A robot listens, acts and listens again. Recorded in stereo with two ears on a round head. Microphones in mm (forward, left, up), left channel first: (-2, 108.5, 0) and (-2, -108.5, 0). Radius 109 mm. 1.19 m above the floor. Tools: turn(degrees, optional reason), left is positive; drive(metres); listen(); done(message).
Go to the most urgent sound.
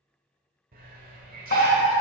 turn(degrees=45, reason="The fire alarm: about 45° left or 135° left.")
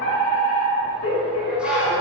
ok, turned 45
turn(degrees=75, reason="So it is at 75° left.")
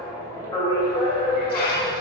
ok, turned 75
turn(degrees=20, reason="The fire alarm is now 20° left.")
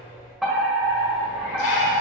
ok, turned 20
drive(metres=1.0)
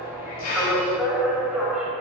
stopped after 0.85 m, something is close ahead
turn(degrees=-10, reason="The fire alarm is now 10° right.")
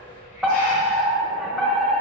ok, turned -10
done("Arrived at the fire alarm, straight ahead.")